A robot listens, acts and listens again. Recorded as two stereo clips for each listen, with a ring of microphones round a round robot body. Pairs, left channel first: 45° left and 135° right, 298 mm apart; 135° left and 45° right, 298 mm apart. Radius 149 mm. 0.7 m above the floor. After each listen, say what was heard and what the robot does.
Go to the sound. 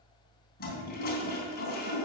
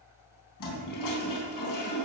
The toilet flushing: 105° left. Turn 105° left.
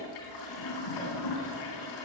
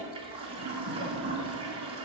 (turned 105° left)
The toilet flushing is now 30° left. Turn 30° left.
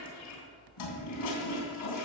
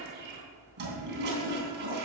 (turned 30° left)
The toilet flushing is now 10° left. Turn 10° left.
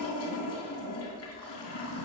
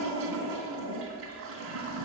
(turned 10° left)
Drive 1.0 m forward.
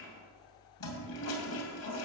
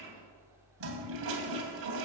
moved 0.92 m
Drive 1.0 m forward.
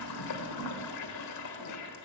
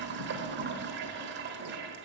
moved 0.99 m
The toilet flushing is now 10° left. Turn 10° left.
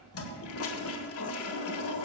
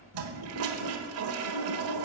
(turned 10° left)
Drive 1.0 m forward.
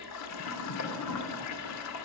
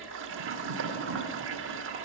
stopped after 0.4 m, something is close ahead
I am next to the toilet flushing.